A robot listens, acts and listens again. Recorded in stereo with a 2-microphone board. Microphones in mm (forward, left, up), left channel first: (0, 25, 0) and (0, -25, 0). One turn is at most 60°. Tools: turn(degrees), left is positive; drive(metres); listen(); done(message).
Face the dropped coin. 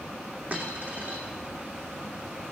turn(degrees=-35)
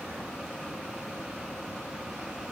listen()
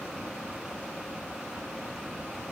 done("I heard a dropped coin, but can't make it out now. It was about straight ahead or 110° right.")